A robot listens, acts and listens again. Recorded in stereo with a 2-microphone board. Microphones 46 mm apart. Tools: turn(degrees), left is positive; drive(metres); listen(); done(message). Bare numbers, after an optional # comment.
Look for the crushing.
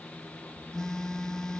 listen()
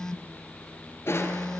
# The crushing: about 65° left or 115° left.
turn(65)
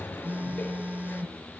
# So it is at 50° left.
turn(50)
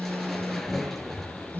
done("Found it: crushing, straight ahead.")